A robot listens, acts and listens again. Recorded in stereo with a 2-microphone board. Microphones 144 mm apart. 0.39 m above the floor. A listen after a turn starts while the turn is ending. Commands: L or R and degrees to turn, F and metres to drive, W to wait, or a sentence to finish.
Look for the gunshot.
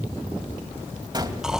R30
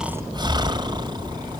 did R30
W
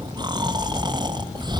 I heard a gunshot, but can't make it out now. It was about straight ahead or 120° right.